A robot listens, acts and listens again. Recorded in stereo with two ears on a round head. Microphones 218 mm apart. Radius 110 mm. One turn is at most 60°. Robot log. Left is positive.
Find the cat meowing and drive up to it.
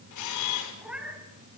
cmd yaw -30
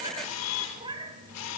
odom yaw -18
note: So it is at 160° right.
cmd yaw -60
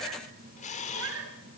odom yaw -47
note: The cat meowing is now 115° right.
cmd yaw -60
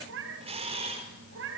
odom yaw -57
note: The cat meowing is now 55° right.
cmd yaw -55
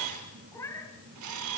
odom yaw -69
note: The cat meowing is now 10° left.
cmd yaw +10
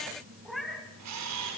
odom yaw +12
cmd fwd 1.0
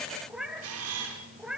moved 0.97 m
cmd fwd 1.0
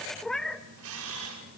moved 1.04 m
cmd fwd 1.0
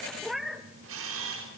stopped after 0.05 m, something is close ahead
end: Arrived at the cat meowing, straight ahead.